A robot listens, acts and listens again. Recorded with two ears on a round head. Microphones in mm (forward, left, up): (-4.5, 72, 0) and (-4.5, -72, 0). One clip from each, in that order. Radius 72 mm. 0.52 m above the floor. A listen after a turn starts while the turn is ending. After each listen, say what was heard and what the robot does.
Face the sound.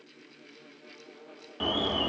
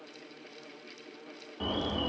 The alarm: about 55° left or 125° left. Turn 55° left.
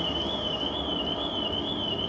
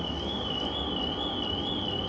So it is at 15° left. Turn 15° left.
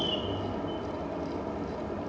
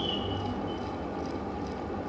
Found it: an alarm, straight ahead, under 1 m away.